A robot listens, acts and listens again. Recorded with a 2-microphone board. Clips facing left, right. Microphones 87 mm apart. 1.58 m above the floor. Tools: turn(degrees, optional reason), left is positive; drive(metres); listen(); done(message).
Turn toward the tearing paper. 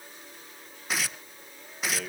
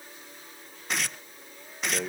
turn(degrees=30)
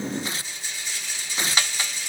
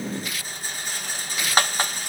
turn(degrees=145, reason="So it is at 145° left.")
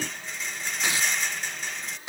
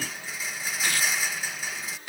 turn(degrees=25, reason="The tearing paper is now 25° left.")
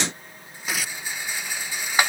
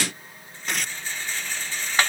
done("Found it: tearing paper, straight ahead.")